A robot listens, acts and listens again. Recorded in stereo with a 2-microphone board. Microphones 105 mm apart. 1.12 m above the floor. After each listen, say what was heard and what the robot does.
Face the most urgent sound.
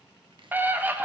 The scream: about 15° right or 165° right. Turn 15° right.
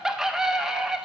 Found it: a scream, straight ahead.